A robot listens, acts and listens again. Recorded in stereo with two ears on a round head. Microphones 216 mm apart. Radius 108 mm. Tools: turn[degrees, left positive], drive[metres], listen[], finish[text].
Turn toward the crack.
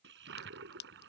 Thought: The crack: about 45° left or 135° left.
Action: turn[45]
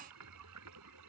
Action: listen[]
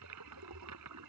Action: finish[I heard a crack, but can't make it out now. It was about straight ahead or 90° left.]